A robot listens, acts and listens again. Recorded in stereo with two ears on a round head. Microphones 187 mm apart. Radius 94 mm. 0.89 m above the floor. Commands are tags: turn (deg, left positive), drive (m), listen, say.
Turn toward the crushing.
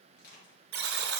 <turn deg="45"/>
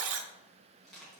<say>Facing the crushing, 2 to 4 m away.</say>